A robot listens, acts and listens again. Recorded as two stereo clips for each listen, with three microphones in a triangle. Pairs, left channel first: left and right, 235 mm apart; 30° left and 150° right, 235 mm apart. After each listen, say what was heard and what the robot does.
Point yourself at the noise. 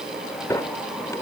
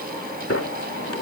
The sliding door: 15° left. Turn 15° left.
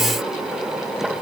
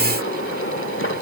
Found it: a sliding door, straight ahead.